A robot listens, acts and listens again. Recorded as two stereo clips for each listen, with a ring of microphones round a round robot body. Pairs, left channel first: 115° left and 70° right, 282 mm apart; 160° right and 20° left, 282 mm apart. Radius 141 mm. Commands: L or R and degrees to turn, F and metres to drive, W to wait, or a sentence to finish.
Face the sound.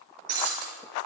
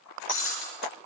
R110
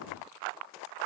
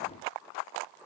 Facing where the breaking glass came from. I can't hear it now.